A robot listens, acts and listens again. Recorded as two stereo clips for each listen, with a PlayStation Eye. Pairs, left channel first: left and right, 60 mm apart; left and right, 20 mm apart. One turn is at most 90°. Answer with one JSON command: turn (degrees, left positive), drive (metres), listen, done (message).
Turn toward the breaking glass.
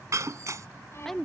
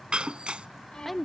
{"turn": -60}
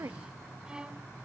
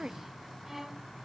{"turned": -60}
{"listen": true}
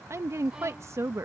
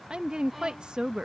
{"done": "I heard breaking glass, but can't make it out now. It was about straight ahead or 60° right."}